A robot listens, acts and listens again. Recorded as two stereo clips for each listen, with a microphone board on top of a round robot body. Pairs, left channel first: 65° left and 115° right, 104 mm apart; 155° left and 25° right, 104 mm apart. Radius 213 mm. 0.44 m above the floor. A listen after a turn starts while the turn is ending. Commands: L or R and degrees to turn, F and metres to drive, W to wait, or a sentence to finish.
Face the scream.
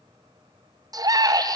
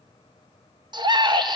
R65
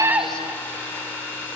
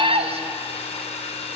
W
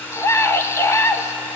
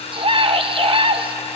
Found it: a scream, straight ahead, 2 to 4 m away.